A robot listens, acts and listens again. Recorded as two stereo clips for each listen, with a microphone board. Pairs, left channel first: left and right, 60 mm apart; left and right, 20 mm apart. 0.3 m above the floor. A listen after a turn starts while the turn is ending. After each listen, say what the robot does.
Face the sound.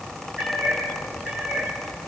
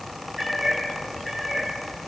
Turn 20° right.
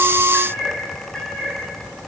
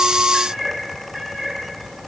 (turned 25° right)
Turn 15° left.
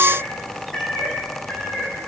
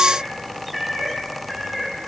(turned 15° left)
Turn 10° left.
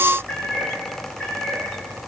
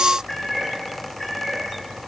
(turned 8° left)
Found it: a cat meowing, straight ahead, over 4 m away.